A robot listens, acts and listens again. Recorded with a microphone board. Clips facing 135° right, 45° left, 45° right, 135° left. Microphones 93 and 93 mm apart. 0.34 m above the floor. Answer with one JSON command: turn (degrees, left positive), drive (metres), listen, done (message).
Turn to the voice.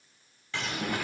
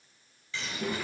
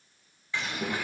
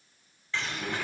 {"turn": -25}
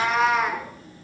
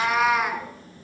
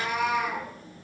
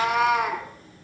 {"done": "Facing the child speaking, over 4 m away."}